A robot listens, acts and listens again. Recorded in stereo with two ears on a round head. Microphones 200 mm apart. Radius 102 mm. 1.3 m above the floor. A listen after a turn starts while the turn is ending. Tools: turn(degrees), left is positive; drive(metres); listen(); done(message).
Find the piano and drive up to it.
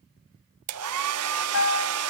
turn(degrees=60)
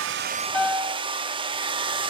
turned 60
drive(metres=1.0)
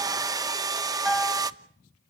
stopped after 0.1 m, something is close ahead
done("Something is in my way. I am facing the piano but have not reached it.")